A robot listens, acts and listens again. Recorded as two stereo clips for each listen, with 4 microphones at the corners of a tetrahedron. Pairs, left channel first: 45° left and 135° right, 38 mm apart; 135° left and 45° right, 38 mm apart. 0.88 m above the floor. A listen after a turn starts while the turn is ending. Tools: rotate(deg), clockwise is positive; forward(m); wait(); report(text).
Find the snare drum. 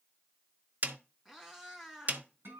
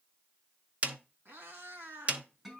rotate(95)
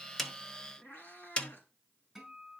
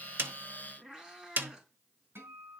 rotate(10)
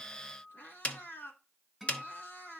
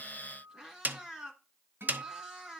report("Facing the snare drum.")